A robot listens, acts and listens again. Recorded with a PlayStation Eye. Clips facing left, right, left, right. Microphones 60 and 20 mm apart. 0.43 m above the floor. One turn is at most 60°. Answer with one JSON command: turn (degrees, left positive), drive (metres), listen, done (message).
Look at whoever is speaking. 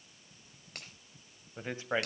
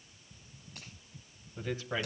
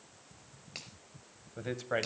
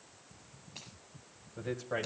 {"turn": 35}
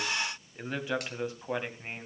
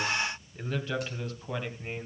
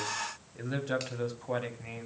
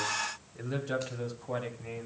{"turn": 25}
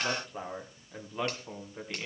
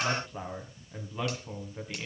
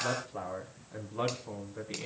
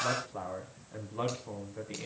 {"turn": 10}
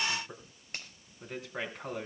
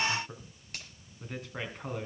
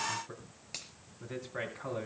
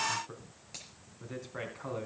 {"done": "Found it: a man speaking, straight ahead, 2 to 4 m away."}